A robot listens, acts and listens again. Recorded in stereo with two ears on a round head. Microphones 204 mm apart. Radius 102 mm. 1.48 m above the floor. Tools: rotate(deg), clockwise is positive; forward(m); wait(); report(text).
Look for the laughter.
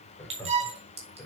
rotate(-30)
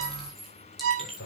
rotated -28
rotate(-140)
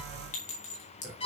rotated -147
rotate(10)
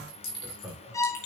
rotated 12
report("Facing the laughter.")